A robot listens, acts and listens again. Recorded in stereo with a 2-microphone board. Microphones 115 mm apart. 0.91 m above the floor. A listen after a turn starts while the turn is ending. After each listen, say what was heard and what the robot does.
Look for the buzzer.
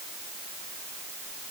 Keep listening.
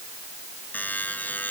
Turn 30° left.
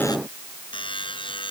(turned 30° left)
So it is at 135° left. Turn 135° left.
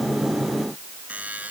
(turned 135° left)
The buzzer is now 10° right. Turn 10° right.
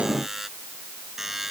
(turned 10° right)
Found it: a buzzer, straight ahead.